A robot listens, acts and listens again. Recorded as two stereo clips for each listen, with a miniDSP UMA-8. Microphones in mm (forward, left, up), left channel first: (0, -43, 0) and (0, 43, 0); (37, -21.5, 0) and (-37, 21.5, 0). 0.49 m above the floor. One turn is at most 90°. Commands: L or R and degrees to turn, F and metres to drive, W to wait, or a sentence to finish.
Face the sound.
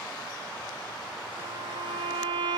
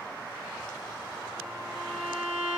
L80
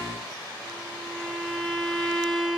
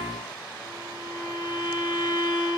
Found it: a violin, straight ahead.